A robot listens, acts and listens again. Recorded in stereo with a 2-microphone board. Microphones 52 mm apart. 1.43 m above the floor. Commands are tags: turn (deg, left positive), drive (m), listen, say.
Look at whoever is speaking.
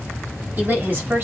<turn deg="-35"/>
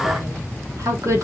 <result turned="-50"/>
<turn deg="-95"/>
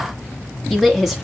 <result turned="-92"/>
<say>Facing the woman speaking.</say>